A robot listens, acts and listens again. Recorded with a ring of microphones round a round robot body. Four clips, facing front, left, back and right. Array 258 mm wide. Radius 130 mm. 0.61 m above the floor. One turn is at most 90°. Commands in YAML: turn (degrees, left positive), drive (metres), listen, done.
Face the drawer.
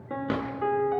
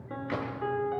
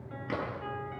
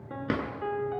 turn: -55
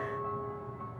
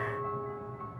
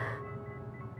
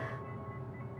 listen: true
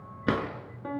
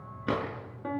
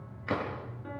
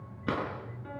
done: "Found it: a drawer, straight ahead."